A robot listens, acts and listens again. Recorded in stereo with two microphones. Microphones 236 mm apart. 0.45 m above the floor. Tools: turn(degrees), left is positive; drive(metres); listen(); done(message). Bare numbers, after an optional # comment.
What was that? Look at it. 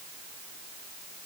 listen()
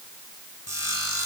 turn(90)
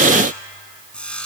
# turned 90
done("Facing the sawing, 1 to 2 m away.")